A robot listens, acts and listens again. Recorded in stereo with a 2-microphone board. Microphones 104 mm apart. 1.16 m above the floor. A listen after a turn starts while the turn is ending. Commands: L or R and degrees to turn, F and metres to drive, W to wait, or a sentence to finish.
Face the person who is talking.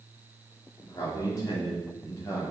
L30
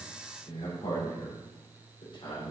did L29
L130
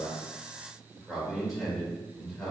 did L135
Found it: a man speaking, straight ahead, over 4 m away.